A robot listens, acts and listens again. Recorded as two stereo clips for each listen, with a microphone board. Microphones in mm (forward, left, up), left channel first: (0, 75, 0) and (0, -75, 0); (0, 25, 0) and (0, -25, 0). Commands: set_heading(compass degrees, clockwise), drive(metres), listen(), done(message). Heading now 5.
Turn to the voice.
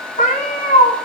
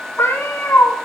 listen()
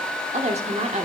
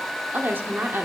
set_heading(55)
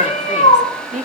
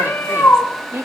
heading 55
set_heading(125)
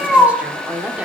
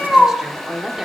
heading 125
set_heading(135)
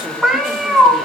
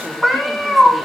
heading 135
listen()
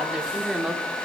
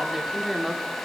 done("Found it: a woman speaking, straight ahead, 1 to 2 m away.")